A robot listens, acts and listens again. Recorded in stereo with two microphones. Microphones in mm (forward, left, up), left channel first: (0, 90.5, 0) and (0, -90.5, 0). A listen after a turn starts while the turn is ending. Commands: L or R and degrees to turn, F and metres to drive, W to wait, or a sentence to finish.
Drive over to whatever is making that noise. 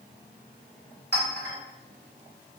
L90
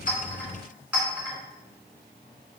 F1.0
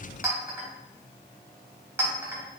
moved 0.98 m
R15
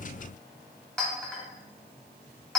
F1.0
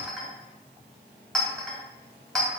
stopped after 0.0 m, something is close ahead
Arrived at the clink, straight ahead.